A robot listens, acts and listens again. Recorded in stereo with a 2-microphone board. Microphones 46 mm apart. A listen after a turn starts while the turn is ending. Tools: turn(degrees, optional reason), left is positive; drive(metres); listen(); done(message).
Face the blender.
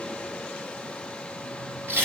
listen()
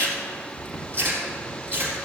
listen()
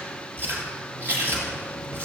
done("I can't make out a blender, only chewing.")